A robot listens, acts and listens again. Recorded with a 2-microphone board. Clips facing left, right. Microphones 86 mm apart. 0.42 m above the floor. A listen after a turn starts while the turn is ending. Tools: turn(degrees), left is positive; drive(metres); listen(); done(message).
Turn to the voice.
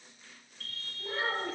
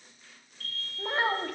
turn(degrees=-65)
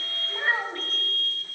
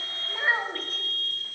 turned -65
done("Facing the child speaking.")